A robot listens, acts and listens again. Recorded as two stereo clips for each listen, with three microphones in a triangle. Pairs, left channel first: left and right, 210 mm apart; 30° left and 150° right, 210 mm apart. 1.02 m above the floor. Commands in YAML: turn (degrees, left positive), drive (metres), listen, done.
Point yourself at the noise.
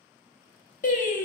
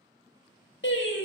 turn: 45
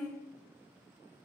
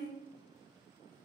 turn: 10
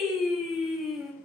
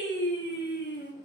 done: "Facing the singing."